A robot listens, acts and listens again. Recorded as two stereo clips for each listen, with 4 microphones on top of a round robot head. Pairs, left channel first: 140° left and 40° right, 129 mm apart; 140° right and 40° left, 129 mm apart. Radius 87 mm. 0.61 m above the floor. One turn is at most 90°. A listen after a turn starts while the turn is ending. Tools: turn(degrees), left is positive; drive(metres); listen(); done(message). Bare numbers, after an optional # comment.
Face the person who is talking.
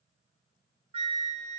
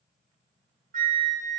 listen()
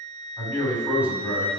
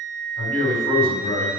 # The man speaking: 125° right.
turn(-90)
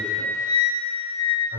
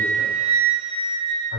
# The man speaking is now 40° right.
turn(-40)
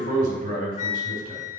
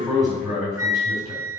# The man speaking is now 25° right.
turn(-25)
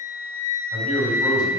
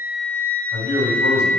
# The man speaking is now 15° left.
turn(15)
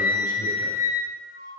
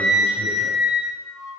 listen()
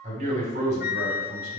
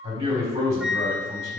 done("Found it: a man speaking, straight ahead.")